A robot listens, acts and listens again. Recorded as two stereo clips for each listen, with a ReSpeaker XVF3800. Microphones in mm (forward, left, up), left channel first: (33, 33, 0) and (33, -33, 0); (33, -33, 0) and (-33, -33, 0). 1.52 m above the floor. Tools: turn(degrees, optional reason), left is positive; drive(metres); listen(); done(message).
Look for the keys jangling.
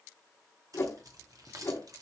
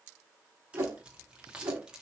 turn(degrees=-105, reason="The keys jangling: 105° right.")
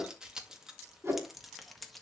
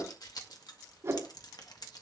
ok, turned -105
done("Found it: keys jangling, straight ahead.")